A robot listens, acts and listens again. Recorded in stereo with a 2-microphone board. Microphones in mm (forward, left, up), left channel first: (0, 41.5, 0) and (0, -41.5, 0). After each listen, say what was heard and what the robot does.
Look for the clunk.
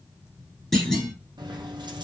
Turn 30° left.
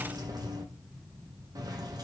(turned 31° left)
Keep listening.
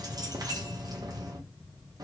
I heard a clunk, but can't make it out now. It was about 30° right or 145° left.